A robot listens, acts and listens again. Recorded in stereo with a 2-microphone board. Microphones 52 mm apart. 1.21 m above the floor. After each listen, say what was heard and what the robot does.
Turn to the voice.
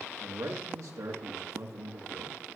Turn 90° right.
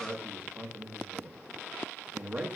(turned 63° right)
So it is at 25° right. Turn 25° right.
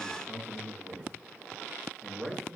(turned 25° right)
Found it: a man speaking, straight ahead, 1 to 2 m away.